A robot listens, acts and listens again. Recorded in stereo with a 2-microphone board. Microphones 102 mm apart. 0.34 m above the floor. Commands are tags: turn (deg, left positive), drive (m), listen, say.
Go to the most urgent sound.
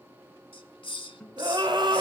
<turn deg="-55"/>
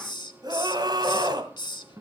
<turn deg="-60"/>
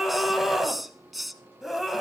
<drive m="1.0"/>
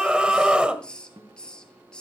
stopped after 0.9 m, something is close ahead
<turn deg="-15"/>
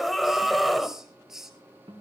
<say>Arrived at the scream, straight ahead.</say>